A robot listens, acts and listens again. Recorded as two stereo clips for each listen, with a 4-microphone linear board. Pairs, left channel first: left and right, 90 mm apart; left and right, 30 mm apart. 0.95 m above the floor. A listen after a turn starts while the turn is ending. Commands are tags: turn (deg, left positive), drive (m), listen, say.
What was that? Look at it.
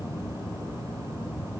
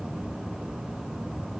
<listen/>
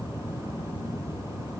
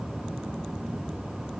<listen/>
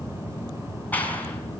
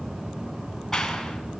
<turn deg="20"/>
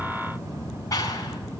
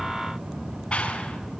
<turn deg="140"/>
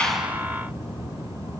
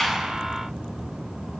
<listen/>
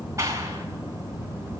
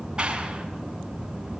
<turn deg="-35"/>
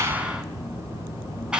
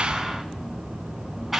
<turn deg="-10"/>
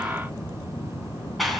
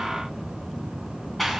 <say>Facing the clap.</say>